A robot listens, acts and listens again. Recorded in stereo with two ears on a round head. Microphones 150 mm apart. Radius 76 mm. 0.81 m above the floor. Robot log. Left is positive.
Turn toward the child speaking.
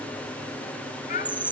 note: The child speaking: about 45° left or 135° left.
cmd yaw +45
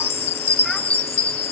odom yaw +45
cmd idle
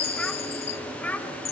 note: So it is at 10° left.
cmd yaw +10
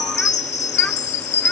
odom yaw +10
cmd idle
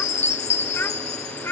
note: The child speaking is now 15° left.
cmd yaw +15
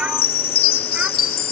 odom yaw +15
cmd idle
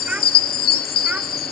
cmd idle
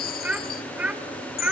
end: Facing the child speaking.